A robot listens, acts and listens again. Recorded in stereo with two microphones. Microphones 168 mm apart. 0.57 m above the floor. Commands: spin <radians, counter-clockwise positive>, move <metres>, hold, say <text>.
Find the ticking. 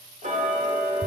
spin -0.79
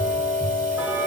spin -0.17
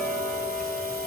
say Facing the ticking.